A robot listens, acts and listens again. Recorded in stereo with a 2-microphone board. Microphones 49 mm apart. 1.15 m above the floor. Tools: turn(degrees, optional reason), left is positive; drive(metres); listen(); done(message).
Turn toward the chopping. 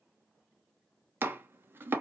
turn(degrees=-45, reason="The chopping: about 45° right or 135° right.")
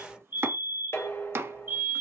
turn(degrees=-85, reason="So it is at 85° right.")
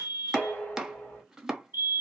turn(degrees=-15, reason="The chopping is now 15° right.")
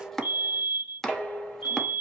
done("Found it: chopping, straight ahead.")